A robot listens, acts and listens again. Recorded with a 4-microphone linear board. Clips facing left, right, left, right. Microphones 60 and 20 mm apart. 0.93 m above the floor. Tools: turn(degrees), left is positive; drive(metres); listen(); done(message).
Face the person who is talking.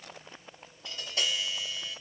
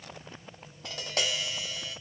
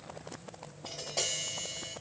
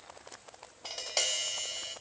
listen()
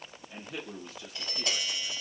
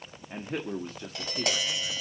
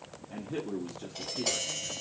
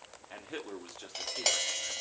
turn(degrees=-45)
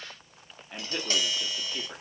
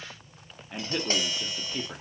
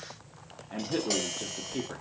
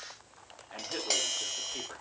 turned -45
done("Facing the man speaking, under 1 m away.")